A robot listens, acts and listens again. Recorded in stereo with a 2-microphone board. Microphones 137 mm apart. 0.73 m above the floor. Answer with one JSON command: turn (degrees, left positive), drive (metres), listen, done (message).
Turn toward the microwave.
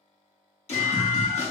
{"turn": 30}
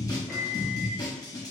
{"done": "Facing the microwave, under 1 m away."}